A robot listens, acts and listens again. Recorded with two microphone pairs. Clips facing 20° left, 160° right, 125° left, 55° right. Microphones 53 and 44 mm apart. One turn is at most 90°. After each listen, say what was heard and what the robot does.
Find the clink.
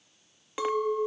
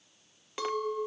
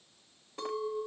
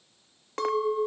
The clink: 55° right. Turn 55° right.
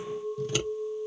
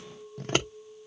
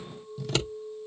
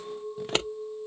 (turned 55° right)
The clink is now 10° right. Turn 10° right.
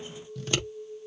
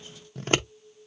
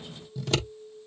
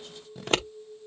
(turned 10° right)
Facing the clink, under 1 m away.